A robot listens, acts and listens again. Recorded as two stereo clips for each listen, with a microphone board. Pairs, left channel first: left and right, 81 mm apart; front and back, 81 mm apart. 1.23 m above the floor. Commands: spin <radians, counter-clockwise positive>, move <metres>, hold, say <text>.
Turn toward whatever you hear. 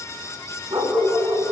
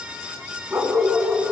spin -1.75
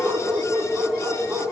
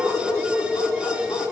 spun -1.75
spin -0.44
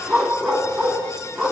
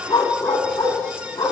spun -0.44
say Found it: a dog barking, straight ahead, over 4 m away.